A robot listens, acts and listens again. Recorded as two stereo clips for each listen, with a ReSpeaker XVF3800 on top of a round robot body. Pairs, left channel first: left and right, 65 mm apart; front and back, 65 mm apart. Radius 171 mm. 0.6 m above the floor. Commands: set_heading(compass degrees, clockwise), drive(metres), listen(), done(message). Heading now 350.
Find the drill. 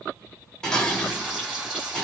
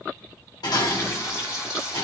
listen()
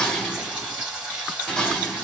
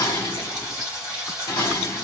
listen()
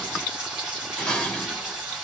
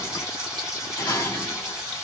done("I can't make out a drill to turn to.")